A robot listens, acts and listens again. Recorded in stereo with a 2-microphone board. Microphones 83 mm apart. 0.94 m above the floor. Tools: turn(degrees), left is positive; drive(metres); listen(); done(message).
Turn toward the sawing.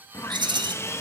turn(degrees=30)
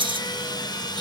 turn(degrees=115)
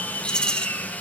turn(degrees=20)
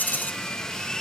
turn(degrees=10)
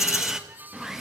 done("Found it: sawing, straight ahead.")